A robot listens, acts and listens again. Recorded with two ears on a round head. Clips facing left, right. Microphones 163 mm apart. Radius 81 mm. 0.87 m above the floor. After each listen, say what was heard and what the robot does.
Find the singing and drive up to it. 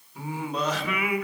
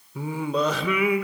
The singing: about 75° right or 105° right. Turn 75° right.
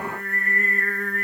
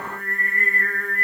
Drive 1.0 m forward.
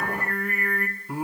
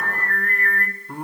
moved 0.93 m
Drive 1.0 m forward.
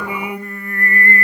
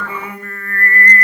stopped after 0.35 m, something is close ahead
The singing is now 15° left. Turn 15° left.
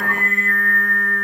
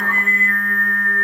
Arrived at the singing, straight ahead.